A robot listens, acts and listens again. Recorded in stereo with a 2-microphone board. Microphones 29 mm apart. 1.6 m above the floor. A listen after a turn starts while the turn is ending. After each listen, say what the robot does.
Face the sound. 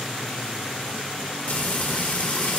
Turn 60° left.
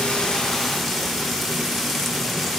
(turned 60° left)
Found it: frying, straight ahead.